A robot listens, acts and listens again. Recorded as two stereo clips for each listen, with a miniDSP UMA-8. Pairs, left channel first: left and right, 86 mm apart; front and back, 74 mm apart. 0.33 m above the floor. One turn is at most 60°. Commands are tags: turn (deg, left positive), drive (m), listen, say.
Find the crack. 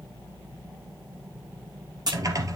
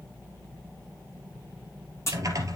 <turn deg="-50"/>
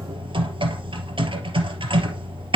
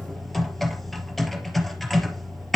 <say>I heard a crack from this way, but can't make it out now.</say>